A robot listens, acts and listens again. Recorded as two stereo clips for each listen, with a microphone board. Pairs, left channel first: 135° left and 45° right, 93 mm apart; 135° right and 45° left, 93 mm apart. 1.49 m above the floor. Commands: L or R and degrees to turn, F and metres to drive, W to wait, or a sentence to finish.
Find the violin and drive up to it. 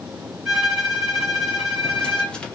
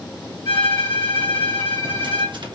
R140
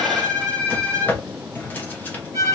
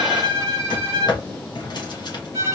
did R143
F1.0
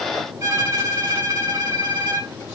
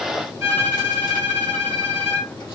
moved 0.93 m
F1.0
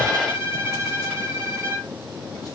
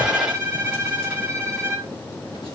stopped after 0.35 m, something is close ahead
Arrived at the violin, straight ahead.